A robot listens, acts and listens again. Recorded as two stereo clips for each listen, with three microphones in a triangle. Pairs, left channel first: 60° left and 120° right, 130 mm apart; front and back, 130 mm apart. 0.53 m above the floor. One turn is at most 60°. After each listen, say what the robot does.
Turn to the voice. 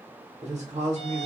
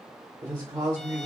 Turn 60° right.
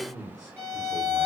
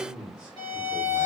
Turn 60° right.
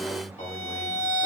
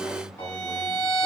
Turn 35° left.
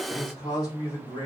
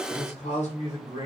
Turn 10° left.
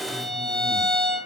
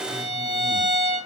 Keep listening.
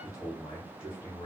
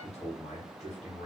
Found it: a man speaking, straight ahead.